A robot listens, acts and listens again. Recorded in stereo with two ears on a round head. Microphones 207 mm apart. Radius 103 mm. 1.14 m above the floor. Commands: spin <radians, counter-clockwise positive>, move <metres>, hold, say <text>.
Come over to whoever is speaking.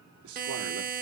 spin -1.13
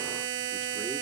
hold
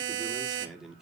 move 1.0
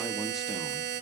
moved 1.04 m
hold
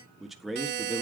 move 1.0
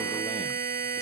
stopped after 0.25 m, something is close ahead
hold
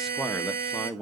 say I am next to the man speaking.